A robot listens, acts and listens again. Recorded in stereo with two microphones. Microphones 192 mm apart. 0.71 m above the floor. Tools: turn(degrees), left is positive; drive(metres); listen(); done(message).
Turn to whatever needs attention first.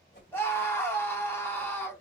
turn(degrees=30)
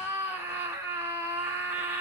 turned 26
turn(degrees=-15)
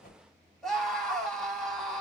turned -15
done("Facing the scream.")